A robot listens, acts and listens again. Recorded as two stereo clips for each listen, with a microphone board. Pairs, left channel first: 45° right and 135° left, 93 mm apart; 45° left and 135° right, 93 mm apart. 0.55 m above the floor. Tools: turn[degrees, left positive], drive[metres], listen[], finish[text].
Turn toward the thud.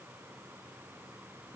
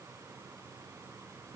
Action: listen[]
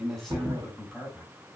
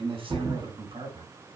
Thought: The thud: 175° right.
Action: turn[-175]
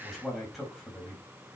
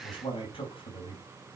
Action: finish[I heard a thud from this way, but can't make it out now.]